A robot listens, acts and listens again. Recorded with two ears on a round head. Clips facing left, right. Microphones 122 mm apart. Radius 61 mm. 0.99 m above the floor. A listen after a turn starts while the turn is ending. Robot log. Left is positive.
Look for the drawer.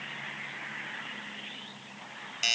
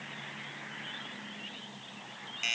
cmd idle
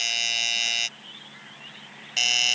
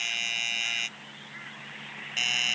cmd idle
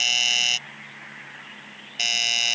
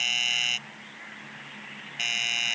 end: I can't make out a drawer to turn to.